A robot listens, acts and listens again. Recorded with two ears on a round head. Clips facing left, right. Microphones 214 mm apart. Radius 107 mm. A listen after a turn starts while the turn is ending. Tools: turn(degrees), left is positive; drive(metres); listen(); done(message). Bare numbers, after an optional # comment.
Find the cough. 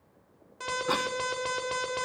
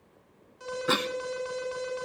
# The cough: about 30° right or 150° right.
turn(-30)
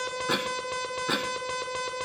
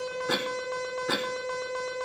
done("Found it: a cough, straight ahead.")